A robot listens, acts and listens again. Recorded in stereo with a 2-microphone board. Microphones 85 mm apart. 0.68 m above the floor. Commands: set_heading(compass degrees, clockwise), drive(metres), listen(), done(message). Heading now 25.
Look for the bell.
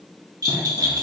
set_heading(80)
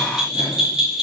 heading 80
set_heading(90)
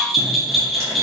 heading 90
done("Facing the bell.")